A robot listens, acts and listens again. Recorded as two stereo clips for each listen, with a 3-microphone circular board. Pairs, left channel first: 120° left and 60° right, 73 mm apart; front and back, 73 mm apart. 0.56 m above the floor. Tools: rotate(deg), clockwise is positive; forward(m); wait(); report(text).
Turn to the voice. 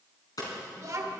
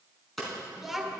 rotate(95)
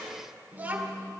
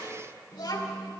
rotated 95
report("Found it: a child speaking, straight ahead.")